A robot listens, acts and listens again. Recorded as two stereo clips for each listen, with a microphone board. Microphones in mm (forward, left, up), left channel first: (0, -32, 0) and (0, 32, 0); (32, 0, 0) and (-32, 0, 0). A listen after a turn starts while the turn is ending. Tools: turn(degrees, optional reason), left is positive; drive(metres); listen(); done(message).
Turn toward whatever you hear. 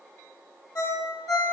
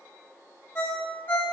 turn(degrees=-60, reason="The ringtone: 60° right.")
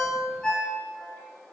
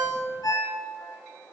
turn(degrees=-15, reason="The ringtone is now 15° right.")
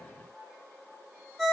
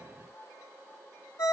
done("Facing the ringtone.")